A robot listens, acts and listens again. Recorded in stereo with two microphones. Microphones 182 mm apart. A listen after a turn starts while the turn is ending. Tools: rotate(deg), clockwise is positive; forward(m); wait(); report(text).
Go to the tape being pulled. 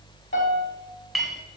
wait()
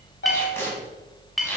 rotate(-30)
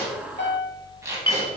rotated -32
rotate(15)
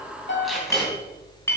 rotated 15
forward(1.0)
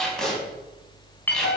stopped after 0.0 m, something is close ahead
report("Something is in my way. I am facing the tape being pulled but have not reached it.")